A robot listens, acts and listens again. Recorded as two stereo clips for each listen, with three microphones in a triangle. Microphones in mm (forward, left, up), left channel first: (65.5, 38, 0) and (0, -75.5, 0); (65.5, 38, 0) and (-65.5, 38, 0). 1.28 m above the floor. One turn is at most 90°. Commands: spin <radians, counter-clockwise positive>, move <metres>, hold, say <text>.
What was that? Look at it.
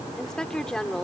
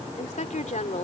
spin -0.44
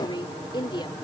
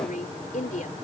say Facing the woman speaking.